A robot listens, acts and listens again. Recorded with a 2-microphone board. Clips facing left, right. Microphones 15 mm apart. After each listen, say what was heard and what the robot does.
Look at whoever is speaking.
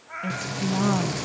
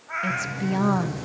The woman speaking: about 15° right or 165° right. Turn 15° right.
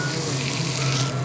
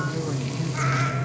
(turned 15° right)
Keep listening.
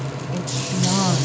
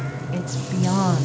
Facing the woman speaking, 1 to 2 m away.